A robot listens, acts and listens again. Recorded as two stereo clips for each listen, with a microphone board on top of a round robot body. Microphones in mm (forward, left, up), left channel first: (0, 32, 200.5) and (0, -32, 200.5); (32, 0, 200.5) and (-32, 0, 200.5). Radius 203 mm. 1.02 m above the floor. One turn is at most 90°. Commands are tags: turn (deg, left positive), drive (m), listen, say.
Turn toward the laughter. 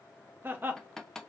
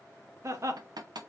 <turn deg="-90"/>
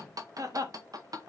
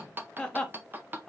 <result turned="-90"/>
<turn deg="-75"/>
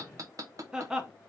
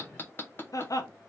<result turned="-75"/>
<turn deg="-10"/>
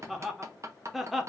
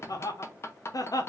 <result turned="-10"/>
<say>Found it: laughter, straight ahead, 1 to 2 m away.</say>